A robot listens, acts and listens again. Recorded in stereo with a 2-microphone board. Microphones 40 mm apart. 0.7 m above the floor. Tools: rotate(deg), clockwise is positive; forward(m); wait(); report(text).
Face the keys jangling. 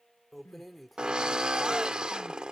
rotate(-30)
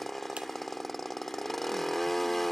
wait()
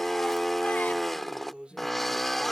rotate(25)
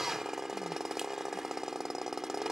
wait()
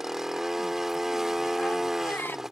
wait()
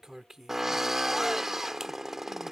rotate(10)
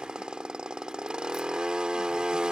wait()
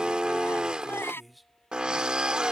report("Facing the keys jangling.")